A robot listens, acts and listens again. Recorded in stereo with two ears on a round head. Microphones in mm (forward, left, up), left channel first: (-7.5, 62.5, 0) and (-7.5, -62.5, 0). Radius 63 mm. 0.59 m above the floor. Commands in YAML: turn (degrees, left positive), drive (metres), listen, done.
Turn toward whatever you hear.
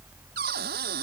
turn: -90
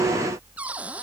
turn: -10
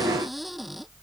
listen: true
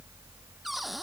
done: "Facing the cupboard door."